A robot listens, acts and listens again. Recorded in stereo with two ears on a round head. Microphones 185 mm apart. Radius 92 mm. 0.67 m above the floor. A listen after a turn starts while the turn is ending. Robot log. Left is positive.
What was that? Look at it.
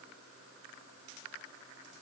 cmd idle
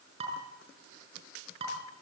note: The dishes clattering: about 30° right or 150° right.
cmd yaw -30
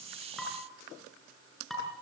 end: Found it: dishes clattering, straight ahead, over 4 m away.